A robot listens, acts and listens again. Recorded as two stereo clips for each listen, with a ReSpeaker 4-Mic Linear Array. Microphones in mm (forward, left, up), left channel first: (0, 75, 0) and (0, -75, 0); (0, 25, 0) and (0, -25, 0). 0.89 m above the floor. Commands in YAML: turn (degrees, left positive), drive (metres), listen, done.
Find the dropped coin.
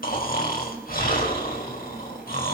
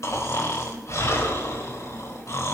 listen: true
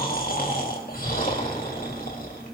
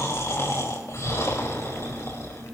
listen: true
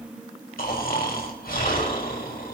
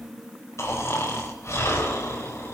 done: "I can't make out a dropped coin, only snoring."